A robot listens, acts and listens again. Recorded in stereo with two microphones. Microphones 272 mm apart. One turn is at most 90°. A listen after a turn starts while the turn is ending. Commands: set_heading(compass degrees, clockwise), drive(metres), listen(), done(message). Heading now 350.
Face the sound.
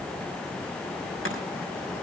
listen()
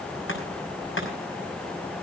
set_heading(300)
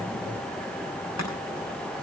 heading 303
listen()
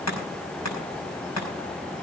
set_heading(223)
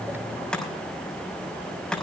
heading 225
done("Facing the chopping.")